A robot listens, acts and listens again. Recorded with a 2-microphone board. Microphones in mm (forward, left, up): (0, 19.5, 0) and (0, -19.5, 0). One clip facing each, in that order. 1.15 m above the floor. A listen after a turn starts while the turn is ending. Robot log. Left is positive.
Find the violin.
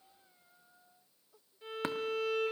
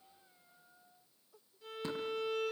note: The violin: about 35° left or 145° left.
cmd yaw +35
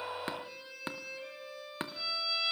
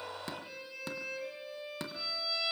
end: Found it: a violin, straight ahead, over 4 m away.